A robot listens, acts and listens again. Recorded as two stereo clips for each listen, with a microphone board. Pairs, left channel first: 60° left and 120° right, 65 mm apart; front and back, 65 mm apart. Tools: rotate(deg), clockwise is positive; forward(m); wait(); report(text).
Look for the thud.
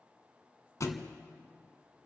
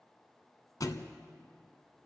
rotate(-25)
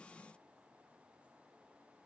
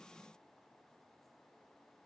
report("I heard a thud from this way, but can't make it out now.")